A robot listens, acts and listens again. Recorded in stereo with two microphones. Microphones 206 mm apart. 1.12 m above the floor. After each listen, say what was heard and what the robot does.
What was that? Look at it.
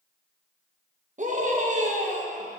The scream: about 40° right or 140° right. Turn 40° right.
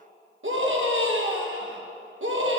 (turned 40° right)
So it is at 105° right. Turn 105° right.
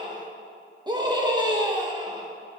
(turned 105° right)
The scream is now 20° right. Turn 20° right.
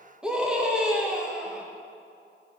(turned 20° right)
Facing the scream, 1 to 2 m away.